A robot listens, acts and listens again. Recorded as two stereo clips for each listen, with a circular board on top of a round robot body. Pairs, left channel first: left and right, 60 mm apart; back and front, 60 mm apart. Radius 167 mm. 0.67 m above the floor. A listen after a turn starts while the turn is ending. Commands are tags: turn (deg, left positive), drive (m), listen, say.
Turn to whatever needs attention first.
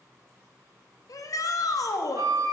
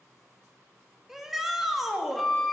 <turn deg="85"/>
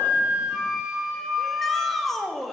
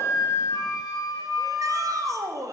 <say>Facing the shout, 1 to 2 m away.</say>